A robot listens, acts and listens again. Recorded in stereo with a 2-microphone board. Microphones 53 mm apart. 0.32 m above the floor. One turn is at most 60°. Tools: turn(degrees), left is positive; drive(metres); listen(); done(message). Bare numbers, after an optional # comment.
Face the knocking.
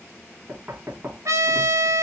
# The knocking: about 35° right or 145° right.
turn(-35)
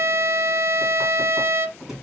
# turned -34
done("Facing the knocking, 1 to 2 m away.")